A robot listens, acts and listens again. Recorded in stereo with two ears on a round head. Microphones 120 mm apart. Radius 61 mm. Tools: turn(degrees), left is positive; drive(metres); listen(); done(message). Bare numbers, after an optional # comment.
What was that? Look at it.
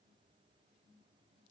listen()
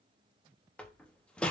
turn(30)
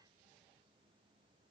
listen()
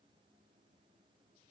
done("I heard a door slam, but can't make it out now. It was about 20° right or 140° left.")